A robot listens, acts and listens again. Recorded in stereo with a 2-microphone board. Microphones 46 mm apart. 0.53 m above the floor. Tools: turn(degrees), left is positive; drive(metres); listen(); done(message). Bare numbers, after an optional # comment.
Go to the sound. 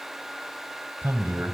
# The man speaking: about 60° right or 120° right.
turn(-60)
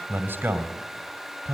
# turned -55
# So it is at 60° right.
turn(-60)
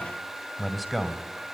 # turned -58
drive(1.0)
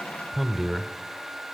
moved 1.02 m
drive(1.0)
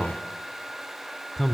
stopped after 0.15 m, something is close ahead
done("Arrived at the man speaking, straight ahead.")